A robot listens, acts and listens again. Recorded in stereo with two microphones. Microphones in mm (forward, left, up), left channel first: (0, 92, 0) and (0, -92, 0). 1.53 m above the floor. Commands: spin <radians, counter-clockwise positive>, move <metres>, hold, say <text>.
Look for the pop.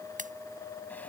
spin -0.79
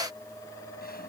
hold
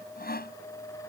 say I heard a pop, but can't make it out now. It was about straight ahead or 90° right.